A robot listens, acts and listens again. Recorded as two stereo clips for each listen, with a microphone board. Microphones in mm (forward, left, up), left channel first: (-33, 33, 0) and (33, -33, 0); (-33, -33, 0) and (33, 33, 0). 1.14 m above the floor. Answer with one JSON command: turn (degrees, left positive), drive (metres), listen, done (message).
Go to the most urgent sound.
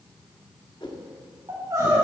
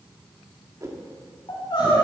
{"turn": -100}
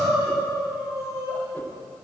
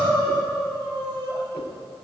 {"turn": 10}
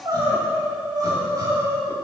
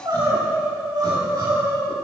{"drive": 1.0}
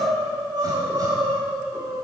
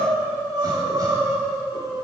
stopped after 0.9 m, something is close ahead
{"done": "Blocked. The crying is further on, straight ahead."}